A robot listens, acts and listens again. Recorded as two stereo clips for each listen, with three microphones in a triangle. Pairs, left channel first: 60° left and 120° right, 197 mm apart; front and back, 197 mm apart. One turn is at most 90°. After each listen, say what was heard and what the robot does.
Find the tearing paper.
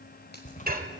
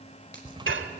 The tearing paper: 110° left. Turn 90° left.
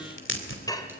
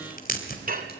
The tearing paper is now 45° left. Turn 45° left.
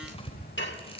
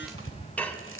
Facing the tearing paper.